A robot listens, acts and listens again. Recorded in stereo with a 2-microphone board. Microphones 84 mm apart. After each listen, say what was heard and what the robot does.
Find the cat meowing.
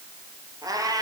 The cat meowing: about 50° right or 130° right. Turn 50° right.
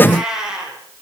So it is at 10° right. Turn 10° right.
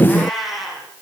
Facing the cat meowing, over 4 m away.